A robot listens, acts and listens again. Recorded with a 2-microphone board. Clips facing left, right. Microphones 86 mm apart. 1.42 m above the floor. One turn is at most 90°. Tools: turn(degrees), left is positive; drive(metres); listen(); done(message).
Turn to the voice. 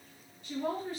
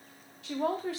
turn(degrees=-90)
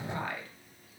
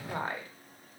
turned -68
turn(degrees=-30)
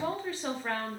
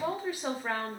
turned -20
turn(degrees=-10)
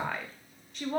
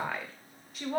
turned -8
done("Facing the woman speaking, under 1 m away.")